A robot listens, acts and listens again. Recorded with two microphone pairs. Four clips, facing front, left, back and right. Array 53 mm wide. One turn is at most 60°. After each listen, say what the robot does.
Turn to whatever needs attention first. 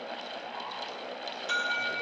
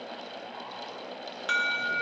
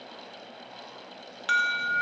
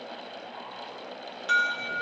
Turn 60° left.
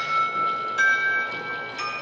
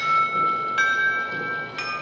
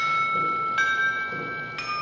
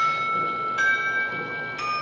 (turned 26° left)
Turn 60° left.
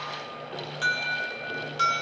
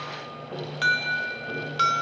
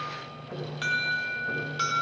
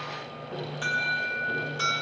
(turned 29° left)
Turn 60° left.
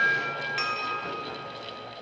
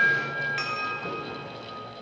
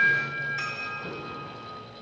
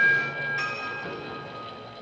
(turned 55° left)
Turn 40° left.
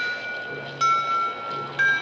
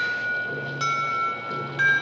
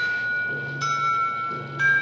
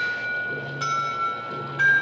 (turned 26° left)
Turn 15° left.
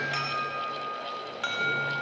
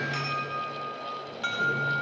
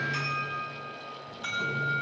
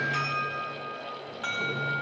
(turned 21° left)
Found it: an alarm, straight ahead, 2 to 4 m away.